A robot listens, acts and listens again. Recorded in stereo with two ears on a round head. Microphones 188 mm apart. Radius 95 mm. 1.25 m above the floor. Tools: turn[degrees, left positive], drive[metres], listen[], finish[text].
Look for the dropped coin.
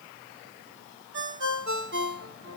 Action: listen[]
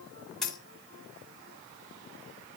Action: turn[30]
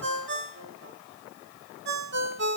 Action: listen[]
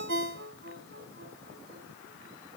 Action: finish[I heard a dropped coin, but can't make it out now. It was about 30° right or 150° left.]